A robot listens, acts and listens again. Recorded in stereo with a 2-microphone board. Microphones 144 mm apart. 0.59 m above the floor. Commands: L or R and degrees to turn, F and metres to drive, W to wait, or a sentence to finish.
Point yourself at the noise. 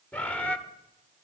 L30
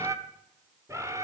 R20
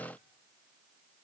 W
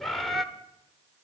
Found it: a bird, straight ahead.